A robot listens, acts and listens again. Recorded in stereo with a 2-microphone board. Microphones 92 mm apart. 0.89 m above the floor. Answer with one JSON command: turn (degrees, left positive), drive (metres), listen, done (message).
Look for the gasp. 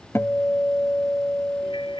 {"listen": true}
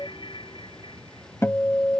{"listen": true}
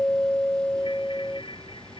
{"done": "I can't make out a gasp to turn to."}